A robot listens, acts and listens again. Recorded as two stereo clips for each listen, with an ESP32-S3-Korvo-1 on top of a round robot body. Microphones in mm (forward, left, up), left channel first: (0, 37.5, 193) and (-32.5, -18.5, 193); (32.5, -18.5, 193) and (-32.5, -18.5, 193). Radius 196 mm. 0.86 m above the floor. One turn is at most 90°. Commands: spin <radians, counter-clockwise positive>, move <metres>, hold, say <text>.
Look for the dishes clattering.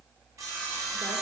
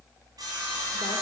hold
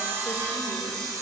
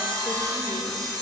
hold
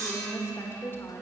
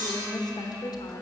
say I can't make out dishes clattering to turn to.